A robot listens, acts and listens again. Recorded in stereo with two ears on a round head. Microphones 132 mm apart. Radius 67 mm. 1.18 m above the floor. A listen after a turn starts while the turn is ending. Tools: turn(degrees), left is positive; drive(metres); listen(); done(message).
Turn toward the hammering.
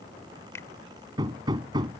turn(degrees=-30)
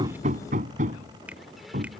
turn(degrees=-125)
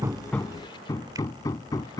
turn(degrees=25)
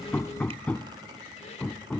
turn(degrees=10)
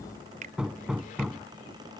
done("Found it: hammering, straight ahead.")